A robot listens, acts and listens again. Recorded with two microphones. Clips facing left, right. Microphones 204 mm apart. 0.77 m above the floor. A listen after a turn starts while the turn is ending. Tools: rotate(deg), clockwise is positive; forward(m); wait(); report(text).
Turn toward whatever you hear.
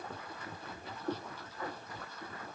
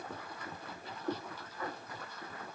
wait()
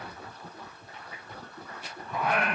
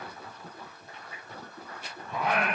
rotate(20)
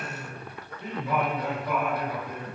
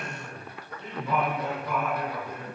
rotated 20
rotate(-15)
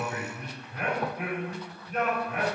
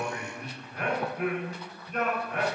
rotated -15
report("Found it: singing, straight ahead, 2 to 4 m away.")